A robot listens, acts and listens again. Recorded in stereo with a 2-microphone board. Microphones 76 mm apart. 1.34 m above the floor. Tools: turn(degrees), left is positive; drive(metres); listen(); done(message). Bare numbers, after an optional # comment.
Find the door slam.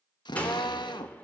# The door slam: about 20° left or 160° left.
turn(20)
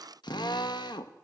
listen()
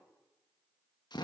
done("I heard a door slam, but can't make it out now. It was about straight ahead or 140° left.")